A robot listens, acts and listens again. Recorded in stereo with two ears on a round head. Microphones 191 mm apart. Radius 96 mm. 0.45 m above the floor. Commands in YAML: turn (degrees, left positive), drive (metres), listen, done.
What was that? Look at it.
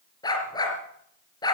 turn: 20
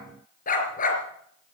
turn: 140
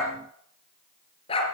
turn: 25
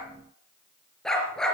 done: "Facing the dog barking."